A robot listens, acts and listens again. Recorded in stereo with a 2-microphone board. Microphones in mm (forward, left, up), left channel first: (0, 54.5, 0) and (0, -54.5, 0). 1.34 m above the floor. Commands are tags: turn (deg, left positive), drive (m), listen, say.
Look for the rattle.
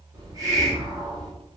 <listen/>
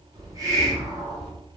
<listen/>
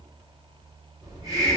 <say>I can't make out a rattle, only a hiss.</say>